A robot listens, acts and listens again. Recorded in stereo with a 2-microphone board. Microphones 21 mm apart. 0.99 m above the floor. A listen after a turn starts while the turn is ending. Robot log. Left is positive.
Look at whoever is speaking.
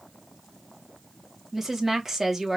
note: The woman speaking: about 15° right or 165° right.
cmd yaw -15
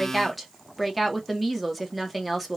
end: Facing the woman speaking, 1 to 2 m away.